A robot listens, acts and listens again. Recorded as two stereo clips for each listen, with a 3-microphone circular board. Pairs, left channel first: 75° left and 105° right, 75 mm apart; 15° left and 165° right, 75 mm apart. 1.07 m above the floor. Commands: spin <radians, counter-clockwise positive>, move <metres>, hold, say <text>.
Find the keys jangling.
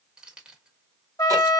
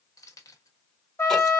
spin -0.52
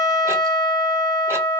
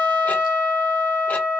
hold
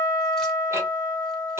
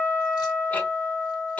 hold
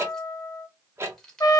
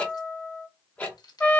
spin -0.17
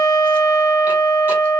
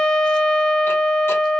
hold
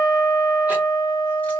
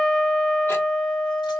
hold
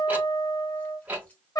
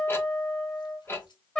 say Facing where the keys jangling came from. I can't hear it now.